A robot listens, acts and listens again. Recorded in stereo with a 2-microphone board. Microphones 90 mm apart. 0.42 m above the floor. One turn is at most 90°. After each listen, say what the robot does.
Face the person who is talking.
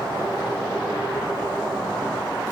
Keep listening.
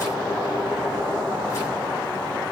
Keep listening.
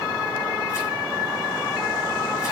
I can't make out anyone speaking.